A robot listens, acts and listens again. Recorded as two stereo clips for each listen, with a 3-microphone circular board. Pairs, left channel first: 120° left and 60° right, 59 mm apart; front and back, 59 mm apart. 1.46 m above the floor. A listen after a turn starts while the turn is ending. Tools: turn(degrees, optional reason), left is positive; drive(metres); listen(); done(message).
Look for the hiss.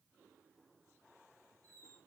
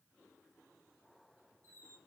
listen()
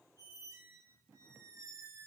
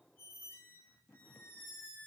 listen()
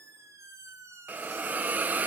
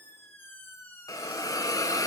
done("Facing the hiss, under 1 m away.")